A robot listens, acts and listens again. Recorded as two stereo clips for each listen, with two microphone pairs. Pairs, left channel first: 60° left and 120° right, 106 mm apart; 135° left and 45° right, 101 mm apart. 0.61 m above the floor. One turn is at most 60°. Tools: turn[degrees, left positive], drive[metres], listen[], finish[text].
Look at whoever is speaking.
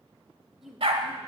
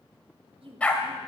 Thought: The woman speaking: 30° right.
Action: turn[-30]
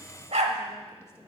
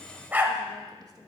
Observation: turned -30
Action: listen[]
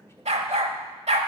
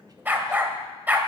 Action: listen[]
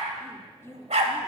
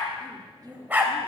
Action: finish[Found it: a woman speaking, straight ahead, 1 to 2 m away.]